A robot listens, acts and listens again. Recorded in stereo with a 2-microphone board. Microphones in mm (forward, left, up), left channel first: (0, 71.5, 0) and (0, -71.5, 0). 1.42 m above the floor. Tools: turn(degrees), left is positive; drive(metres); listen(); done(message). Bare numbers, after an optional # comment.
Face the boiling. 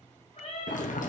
# The boiling: about 70° left or 110° left.
turn(70)
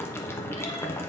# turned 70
# So it is at 20° left.
turn(20)
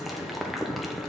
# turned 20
done("Facing the boiling.")